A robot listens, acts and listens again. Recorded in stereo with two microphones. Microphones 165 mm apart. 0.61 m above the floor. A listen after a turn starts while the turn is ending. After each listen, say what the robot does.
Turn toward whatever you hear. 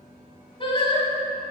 Turn 35° left.
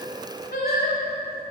Turn 110° left.
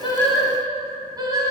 Turn 25° right.
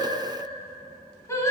Turn 15° left.
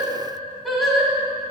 Found it: singing, straight ahead, 1 to 2 m away.